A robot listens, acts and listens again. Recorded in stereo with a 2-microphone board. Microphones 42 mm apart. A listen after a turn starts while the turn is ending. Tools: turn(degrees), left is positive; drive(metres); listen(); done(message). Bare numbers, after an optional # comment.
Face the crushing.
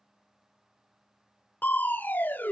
# The crushing: about 45° left or 135° left.
turn(45)
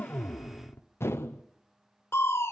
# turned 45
# So it is at 85° left.
turn(85)
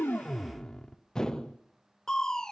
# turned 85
# The crushing is now 15° left.
turn(15)
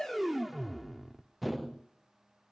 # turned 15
done("Found it: crushing, straight ahead.")